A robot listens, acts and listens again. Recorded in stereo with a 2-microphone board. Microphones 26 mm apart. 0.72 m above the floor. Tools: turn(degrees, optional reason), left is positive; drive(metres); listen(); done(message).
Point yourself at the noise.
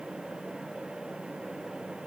listen()
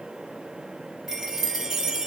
turn(degrees=-30)
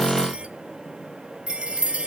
turn(degrees=-135, reason="So it is at 135° right.")
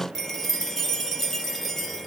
done("Found it: a chime, straight ahead, 1 to 2 m away.")